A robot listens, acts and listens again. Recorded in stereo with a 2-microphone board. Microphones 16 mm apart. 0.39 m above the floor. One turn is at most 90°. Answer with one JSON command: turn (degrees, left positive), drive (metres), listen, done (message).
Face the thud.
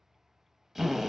{"listen": true}
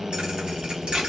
{"turn": -65}
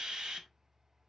{"listen": true}
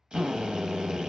{"done": "I heard a thud, but can't make it out now. It was about straight ahead or 50° right."}